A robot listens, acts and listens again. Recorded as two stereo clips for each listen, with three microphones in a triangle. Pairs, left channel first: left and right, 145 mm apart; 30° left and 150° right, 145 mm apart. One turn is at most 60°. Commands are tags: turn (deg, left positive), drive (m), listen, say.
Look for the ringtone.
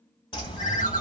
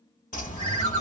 <turn deg="60"/>
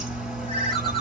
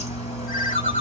<turn deg="45"/>
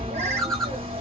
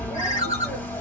<say>Facing the ringtone, 1 to 2 m away.</say>